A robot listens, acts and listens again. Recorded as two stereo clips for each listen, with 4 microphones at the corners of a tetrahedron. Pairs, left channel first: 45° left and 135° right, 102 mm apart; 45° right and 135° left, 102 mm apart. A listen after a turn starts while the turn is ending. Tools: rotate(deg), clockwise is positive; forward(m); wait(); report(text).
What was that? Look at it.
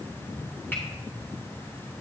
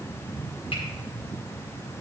wait()
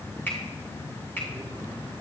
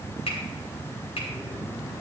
rotate(25)
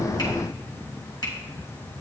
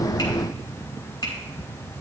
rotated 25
report("Found it: a finger snap, straight ahead, 2 to 4 m away.")